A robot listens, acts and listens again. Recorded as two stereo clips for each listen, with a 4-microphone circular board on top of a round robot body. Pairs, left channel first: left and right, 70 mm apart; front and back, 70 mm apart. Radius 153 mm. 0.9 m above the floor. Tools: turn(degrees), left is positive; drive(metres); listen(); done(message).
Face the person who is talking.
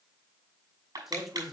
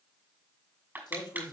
done("Facing the man speaking, 2 to 4 m away.")